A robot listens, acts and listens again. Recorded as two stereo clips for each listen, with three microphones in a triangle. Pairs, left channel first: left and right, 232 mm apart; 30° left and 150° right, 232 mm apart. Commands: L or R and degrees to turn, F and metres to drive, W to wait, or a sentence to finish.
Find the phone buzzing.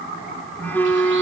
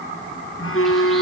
L10
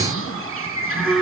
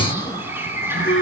Facing the phone buzzing, 1 to 2 m away.